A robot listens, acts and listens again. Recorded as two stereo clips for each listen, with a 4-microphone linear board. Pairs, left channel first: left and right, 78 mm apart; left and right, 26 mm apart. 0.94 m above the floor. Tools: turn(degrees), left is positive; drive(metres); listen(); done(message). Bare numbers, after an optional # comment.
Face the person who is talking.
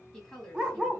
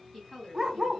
turn(30)
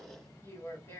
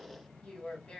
# So it is at 135° left.
turn(135)
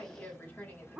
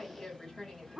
# The woman speaking is now 25° left.
turn(25)
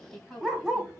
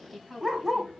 done("Found it: a woman speaking, straight ahead, 1 to 2 m away.")